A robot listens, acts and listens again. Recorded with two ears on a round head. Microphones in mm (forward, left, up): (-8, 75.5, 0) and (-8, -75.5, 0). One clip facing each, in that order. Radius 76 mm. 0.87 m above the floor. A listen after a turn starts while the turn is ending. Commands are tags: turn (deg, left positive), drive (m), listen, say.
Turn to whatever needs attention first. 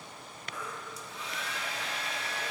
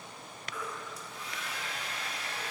<turn deg="30"/>
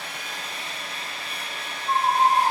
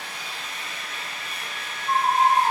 <say>Facing the baby crying.</say>